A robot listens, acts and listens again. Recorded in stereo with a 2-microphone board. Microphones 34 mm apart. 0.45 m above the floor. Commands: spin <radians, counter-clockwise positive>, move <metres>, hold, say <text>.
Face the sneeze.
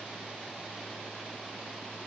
hold
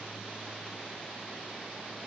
hold
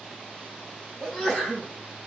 spin -0.52
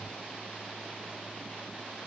hold
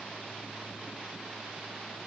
say I heard a sneeze, but can't make it out now. It was about 25° left or 145° right.